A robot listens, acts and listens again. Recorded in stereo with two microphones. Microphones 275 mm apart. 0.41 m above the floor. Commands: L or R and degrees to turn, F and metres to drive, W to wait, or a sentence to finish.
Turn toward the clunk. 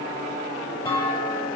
L30
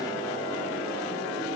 W
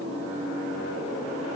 I heard a clunk, but can't make it out now. It was about 20° right or 140° left.